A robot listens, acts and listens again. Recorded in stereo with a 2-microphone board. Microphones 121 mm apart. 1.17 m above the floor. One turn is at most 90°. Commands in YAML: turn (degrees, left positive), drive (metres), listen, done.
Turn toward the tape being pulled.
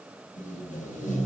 turn: 90
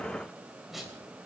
done: "Found it: tape being pulled, straight ahead."